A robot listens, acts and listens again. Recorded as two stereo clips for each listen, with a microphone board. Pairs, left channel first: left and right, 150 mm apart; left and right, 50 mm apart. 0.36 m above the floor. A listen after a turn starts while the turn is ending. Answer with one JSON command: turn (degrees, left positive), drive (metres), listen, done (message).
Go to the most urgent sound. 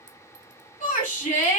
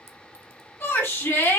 {"turn": 55}
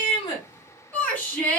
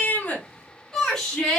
{"turn": 15}
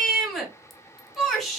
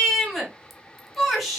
{"drive": 1.0}
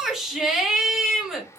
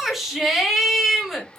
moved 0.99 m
{"drive": 1.0}
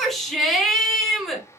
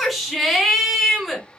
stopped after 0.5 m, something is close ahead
{"done": "Arrived at the shout, straight ahead."}